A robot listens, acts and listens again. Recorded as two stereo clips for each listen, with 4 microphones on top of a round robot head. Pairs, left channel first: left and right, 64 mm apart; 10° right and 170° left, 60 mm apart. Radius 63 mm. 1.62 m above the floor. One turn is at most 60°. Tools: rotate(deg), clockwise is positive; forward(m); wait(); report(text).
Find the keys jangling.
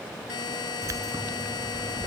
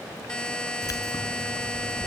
rotate(40)
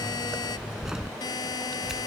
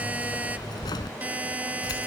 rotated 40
report("Facing the keys jangling.")